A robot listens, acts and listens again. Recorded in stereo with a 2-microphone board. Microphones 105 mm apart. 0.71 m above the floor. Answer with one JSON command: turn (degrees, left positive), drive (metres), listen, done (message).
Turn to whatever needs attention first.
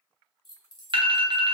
{"turn": -55}
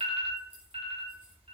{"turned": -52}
{"turn": -75}
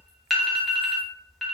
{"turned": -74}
{"done": "Found it: an alarm, straight ahead, under 1 m away."}